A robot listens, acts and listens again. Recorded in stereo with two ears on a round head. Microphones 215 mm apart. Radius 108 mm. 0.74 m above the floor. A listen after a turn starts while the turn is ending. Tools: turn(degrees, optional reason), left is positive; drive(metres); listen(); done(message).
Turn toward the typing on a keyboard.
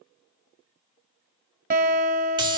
listen()
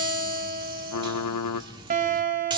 turn(degrees=90)
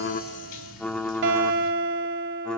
done("Facing the typing on a keyboard, under 1 m away.")